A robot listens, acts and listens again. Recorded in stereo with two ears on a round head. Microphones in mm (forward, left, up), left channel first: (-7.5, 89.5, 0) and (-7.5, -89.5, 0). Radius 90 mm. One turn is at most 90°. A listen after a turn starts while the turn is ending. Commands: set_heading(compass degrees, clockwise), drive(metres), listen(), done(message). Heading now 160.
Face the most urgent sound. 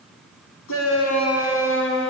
set_heading(70)
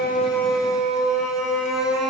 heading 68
done("Found it: a shout, straight ahead.")